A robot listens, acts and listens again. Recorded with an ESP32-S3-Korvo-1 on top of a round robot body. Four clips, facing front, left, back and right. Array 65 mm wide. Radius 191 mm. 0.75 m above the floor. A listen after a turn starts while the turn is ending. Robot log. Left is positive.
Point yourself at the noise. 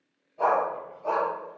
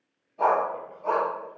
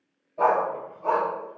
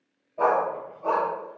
note: The dog barking: 120° right.
cmd yaw -120
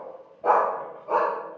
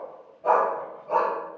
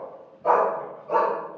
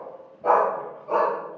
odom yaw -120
end: Found it: a dog barking, straight ahead.